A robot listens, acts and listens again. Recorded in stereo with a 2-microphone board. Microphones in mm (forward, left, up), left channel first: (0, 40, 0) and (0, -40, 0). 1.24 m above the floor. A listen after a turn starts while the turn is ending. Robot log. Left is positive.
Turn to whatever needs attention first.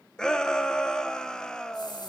cmd yaw +30
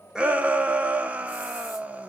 note: So it is at 20° right.
cmd yaw -20
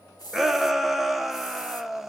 end: Found it: a shout, straight ahead.